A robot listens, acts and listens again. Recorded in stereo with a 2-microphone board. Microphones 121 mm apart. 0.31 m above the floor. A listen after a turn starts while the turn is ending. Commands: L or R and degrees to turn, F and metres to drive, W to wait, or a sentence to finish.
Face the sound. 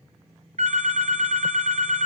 R75
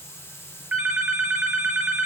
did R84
R20
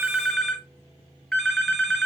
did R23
Facing the phone ringing.